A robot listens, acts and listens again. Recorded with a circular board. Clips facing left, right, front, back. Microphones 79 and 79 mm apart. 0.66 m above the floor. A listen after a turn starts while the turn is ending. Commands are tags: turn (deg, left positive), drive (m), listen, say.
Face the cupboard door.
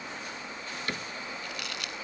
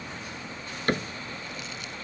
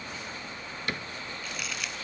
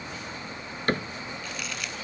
<turn deg="-135"/>
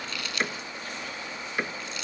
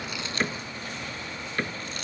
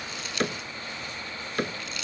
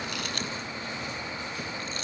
<turn deg="10"/>
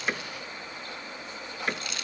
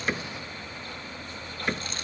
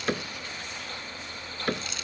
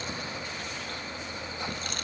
<say>Found it: a cupboard door, straight ahead.</say>